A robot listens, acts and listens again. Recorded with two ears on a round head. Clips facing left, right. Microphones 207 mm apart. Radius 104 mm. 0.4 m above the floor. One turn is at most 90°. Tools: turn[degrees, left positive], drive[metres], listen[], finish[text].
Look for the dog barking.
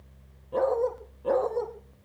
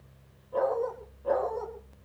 Thought: The dog barking: about 45° left or 135° left.
Action: turn[45]
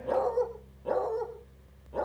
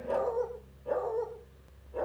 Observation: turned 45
Thought: So it is at 90° left.
Action: turn[90]
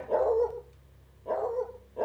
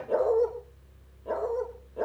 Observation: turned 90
Thought: The dog barking is now 10° right.
Action: turn[-10]
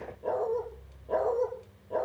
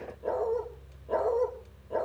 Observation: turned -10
Action: finish[Found it: a dog barking, straight ahead.]